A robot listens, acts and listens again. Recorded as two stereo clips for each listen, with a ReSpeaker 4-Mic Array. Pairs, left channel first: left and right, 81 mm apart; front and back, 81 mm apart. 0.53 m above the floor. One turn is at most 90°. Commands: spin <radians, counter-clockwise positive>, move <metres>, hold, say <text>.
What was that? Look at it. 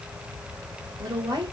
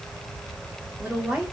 spin -1.57
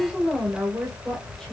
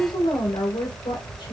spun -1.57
say Facing the woman speaking, 1 to 2 m away.